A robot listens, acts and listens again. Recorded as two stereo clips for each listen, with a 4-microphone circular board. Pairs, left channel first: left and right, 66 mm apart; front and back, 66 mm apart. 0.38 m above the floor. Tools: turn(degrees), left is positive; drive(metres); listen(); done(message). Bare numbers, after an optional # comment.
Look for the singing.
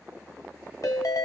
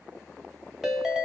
listen()
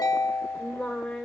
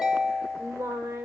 # The singing: 175° left.
turn(175)
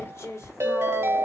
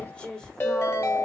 # The singing is now 75° left.
turn(75)
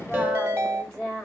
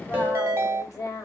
# The singing is now 25° left.
turn(25)
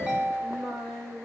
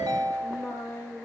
done("Found it: singing, straight ahead.")